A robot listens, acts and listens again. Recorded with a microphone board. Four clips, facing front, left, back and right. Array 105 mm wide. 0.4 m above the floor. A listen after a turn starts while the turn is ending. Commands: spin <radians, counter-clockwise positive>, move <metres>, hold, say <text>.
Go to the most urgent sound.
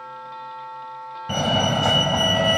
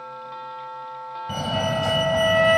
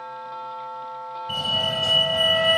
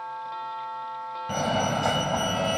spin -0.35
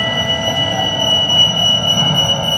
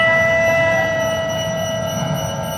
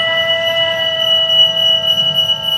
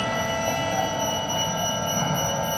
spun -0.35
move 1.0
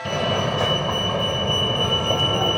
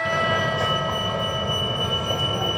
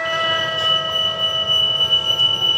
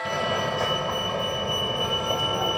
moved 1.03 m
move 1.0
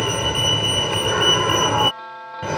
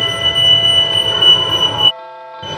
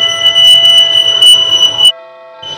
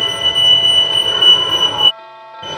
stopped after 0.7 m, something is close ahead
say Arrived at the fire alarm, straight ahead.